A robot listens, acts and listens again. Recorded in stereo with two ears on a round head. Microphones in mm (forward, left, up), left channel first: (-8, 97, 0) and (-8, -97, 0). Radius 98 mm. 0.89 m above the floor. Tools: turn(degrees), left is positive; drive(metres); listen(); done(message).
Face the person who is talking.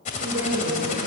turn(degrees=-60)
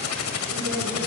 listen()
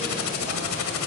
listen()
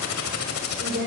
turn(degrees=-55)
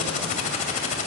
listen()
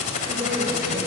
turn(degrees=-10)
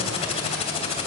listen()
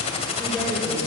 done("Facing the woman speaking.")